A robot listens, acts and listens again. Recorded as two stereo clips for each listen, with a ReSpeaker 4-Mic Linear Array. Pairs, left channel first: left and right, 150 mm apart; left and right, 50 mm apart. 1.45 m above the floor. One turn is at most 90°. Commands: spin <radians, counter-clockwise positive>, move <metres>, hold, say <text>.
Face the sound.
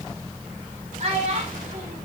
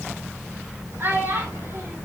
spin -0.87
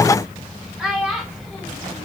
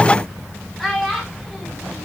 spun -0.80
say Found it: a child speaking, straight ahead, 2 to 4 m away.